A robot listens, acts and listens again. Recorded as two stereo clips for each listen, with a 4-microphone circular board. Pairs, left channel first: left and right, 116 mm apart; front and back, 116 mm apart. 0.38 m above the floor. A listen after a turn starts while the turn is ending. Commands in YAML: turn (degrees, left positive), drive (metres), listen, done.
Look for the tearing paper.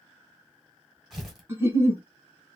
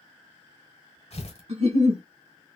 done: "Found it: tearing paper, straight ahead."